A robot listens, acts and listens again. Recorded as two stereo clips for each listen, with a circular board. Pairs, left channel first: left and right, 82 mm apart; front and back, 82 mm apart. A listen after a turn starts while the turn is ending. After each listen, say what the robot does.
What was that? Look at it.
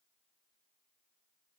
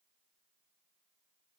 Keep listening.
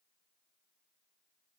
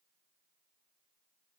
Keep listening.
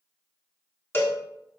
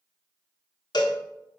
Turn 30° left.
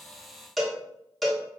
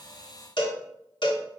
Found it: a cowbell, straight ahead, 1 to 2 m away.